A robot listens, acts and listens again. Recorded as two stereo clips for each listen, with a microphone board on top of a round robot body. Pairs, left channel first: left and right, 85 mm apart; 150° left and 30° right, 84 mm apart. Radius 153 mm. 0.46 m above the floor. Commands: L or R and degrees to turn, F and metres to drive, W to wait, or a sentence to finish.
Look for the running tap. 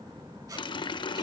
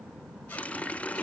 L75
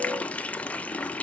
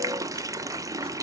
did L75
L15
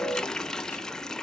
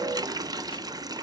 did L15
L10
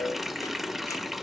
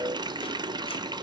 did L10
Facing the running tap.